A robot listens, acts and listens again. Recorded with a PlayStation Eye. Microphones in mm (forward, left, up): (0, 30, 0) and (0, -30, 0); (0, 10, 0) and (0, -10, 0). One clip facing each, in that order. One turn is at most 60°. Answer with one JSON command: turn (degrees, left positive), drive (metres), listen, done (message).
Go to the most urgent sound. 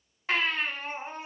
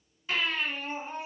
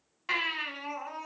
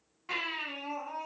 {"turn": 55}
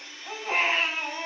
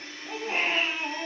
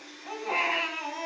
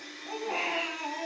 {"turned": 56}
{"turn": 60}
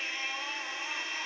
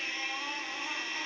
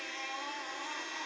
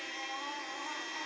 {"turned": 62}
{"turn": 10}
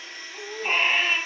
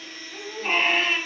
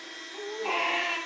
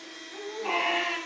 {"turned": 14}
{"drive": 1.0}
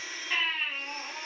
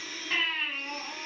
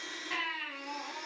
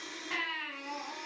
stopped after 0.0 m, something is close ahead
{"done": "Something is in my way. I am facing the baby crying but have not reached it."}